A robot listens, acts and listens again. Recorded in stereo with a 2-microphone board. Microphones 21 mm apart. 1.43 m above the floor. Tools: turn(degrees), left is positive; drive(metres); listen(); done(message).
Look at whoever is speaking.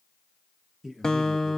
turn(degrees=-30)
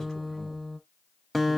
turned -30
listen()
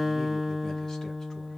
listen()
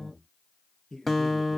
turn(degrees=20)
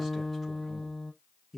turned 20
done("Facing the man speaking, 1 to 2 m away.")